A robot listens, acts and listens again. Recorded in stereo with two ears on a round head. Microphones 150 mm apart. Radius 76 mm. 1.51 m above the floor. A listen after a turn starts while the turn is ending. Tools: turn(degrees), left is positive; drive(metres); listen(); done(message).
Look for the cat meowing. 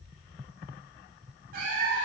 turn(degrees=-55)
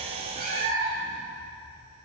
turn(degrees=-55)
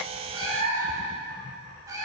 turn(degrees=-20)
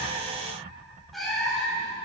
done("Facing the cat meowing, 2 to 4 m away.")